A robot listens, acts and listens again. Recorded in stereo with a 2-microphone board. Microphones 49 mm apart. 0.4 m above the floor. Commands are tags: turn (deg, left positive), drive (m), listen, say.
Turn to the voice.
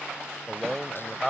<turn deg="30"/>
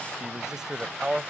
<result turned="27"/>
<turn deg="-15"/>
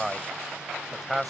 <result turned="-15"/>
<say>Found it: a man speaking, straight ahead.</say>